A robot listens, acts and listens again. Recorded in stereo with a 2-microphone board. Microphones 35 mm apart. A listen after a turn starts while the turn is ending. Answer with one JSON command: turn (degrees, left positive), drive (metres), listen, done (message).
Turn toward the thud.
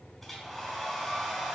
{"listen": true}
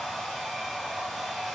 {"listen": true}
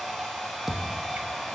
{"turn": -30}
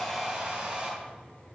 {"listen": true}
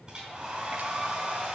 {"done": "I heard a thud, but can't make it out now. It was about 20° left or 140° right."}